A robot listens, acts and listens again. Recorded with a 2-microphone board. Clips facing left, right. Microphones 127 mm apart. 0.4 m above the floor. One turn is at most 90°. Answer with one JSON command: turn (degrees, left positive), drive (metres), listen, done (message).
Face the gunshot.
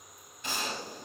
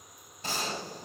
{"turn": -35}
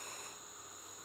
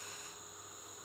{"listen": true}
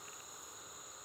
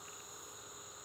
{"done": "I heard a gunshot, but can't make it out now. It was about straight ahead or 110° right."}